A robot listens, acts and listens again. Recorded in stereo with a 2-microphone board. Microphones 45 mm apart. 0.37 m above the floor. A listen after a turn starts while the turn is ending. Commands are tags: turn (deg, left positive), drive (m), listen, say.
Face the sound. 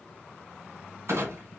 <turn deg="-70"/>
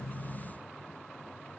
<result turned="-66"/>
<listen/>
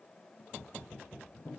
<say>I heard a clunk, but can't make it out now. It was about 5° right or 45° right.</say>